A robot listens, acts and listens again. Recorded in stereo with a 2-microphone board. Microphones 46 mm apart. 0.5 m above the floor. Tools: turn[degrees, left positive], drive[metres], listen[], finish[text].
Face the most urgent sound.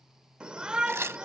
Thought: The shout: about 20° right or 160° right.
Action: turn[-20]
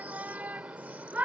Thought: So it is at 140° right.
Action: turn[-140]
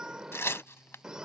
Thought: The shout is now 20° right.
Action: turn[-20]
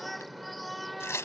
Action: finish[Found it: a shout, straight ahead.]